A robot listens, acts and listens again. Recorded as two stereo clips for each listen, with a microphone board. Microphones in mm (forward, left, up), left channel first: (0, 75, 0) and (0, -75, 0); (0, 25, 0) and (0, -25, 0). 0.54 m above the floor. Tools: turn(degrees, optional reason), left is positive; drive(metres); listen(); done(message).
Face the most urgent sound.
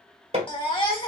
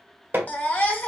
turn(degrees=35, reason="The baby crying: about 35° left or 145° left.")
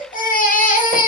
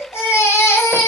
turn(degrees=105, reason="So it is at 105° left.")
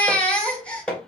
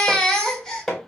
turn(degrees=10, reason="The baby crying is now 10° left.")
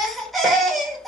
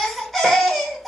done("Facing the baby crying.")